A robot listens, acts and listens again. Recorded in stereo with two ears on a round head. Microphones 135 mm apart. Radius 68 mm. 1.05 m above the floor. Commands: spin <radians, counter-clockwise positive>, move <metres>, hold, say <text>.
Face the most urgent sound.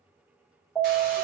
spin 0.52
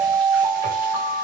spin -0.61
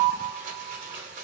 spin 0.17
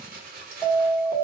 say Found it: an alarm, straight ahead.